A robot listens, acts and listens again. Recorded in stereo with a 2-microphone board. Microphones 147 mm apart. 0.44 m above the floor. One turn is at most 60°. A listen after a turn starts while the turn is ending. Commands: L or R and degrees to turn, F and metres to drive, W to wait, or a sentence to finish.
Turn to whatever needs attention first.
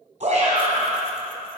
R50
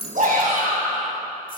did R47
R60
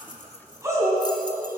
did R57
R20
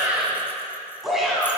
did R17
Found it: a shout, straight ahead, 2 to 4 m away.